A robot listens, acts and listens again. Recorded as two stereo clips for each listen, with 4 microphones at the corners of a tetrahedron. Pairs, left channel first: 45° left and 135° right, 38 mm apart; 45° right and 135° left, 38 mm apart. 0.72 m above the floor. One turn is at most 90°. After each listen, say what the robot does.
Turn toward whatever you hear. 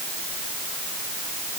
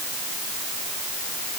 Keep listening.
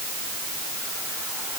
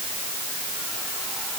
Keep listening.
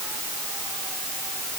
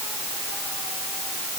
I can't make out anything.